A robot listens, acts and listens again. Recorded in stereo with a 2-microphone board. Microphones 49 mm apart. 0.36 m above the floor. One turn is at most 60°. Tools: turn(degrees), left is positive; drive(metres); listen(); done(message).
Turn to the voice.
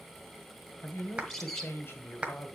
turn(degrees=55)
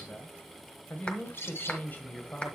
turn(degrees=50)
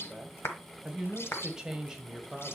turn(degrees=-10)
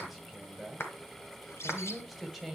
done("Found it: a man speaking, straight ahead, 1 to 2 m away.")